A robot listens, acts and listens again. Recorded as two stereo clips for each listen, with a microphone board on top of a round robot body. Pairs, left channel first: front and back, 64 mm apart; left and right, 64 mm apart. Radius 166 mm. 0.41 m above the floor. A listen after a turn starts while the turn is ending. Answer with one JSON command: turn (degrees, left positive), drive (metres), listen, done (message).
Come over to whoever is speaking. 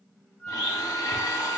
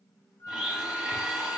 {"listen": true}
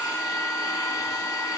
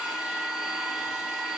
{"listen": true}
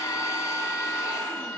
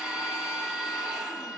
{"done": "I can't make out anyone speaking to turn to."}